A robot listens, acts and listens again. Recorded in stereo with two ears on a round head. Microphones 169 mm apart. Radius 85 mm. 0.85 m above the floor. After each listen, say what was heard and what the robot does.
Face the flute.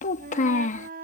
The flute: about 55° right or 125° right. Turn 55° right.
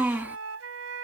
So it is at 75° right. Turn 75° right.
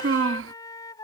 The flute is now 20° left. Turn 20° left.
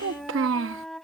Found it: a flute, straight ahead.